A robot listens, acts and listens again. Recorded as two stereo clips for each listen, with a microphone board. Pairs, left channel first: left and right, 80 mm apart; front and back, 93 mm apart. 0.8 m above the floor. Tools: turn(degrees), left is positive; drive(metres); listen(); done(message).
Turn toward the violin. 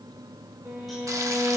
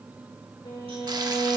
turn(degrees=-35)
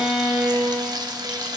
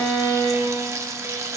turn(degrees=-20)
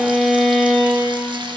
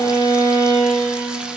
done("Found it: a violin, straight ahead.")